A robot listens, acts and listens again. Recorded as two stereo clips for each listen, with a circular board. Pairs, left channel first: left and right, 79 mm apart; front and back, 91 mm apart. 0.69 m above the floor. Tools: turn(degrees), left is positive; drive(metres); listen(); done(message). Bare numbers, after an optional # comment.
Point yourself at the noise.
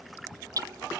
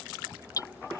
# The hammering: 50° right.
turn(-50)
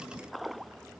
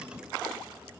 listen()
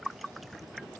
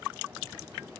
listen()
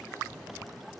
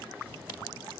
done("I heard hammering from this way, but can't make it out now.")